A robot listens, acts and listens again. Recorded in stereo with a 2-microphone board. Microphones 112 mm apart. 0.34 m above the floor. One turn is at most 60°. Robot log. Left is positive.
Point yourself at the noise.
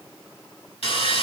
note: The sawing: about 70° left or 110° left.
cmd yaw +60
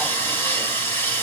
note: So it is at 25° left.
cmd yaw +25
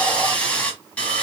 note: The sawing is now 15° left.
cmd yaw +15
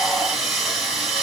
end: Found it: sawing, straight ahead.